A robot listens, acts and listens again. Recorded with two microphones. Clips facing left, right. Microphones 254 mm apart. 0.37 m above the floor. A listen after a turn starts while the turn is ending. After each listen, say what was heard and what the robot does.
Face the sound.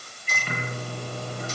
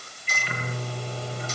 The microwave: about 45° left or 135° left. Turn 45° left.
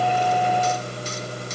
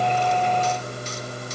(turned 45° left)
So it is at 85° left. Turn 85° left.
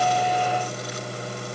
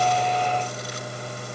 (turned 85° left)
The microwave is now 30° left. Turn 30° left.
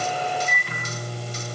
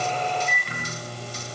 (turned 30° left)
Facing the microwave, over 4 m away.